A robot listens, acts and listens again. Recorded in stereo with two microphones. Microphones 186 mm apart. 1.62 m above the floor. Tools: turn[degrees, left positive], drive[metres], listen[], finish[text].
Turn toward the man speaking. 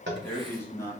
Thought: The man speaking: about 15° left or 165° left.
Action: turn[15]
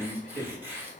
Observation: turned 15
Action: turn[30]
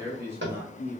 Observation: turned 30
Thought: So it is at 10° right.
Action: turn[-10]
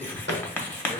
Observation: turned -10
Action: finish[Found it: a man speaking, straight ahead.]